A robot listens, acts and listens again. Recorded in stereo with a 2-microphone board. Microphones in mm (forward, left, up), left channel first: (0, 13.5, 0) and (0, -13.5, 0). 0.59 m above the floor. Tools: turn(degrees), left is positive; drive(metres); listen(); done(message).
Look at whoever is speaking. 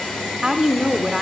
turn(degrees=-25)
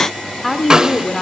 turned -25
done("Found it: a woman speaking, straight ahead, 1 to 2 m away.")